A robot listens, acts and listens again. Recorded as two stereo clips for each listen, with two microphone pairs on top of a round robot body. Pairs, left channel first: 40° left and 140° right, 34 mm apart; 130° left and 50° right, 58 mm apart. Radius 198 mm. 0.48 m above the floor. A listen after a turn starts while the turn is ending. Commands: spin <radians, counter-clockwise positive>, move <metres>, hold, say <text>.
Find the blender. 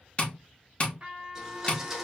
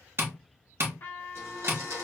spin -1.13
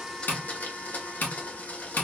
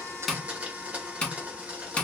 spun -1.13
spin 0.17
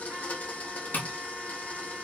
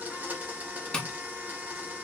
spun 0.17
say Found it: a blender, straight ahead.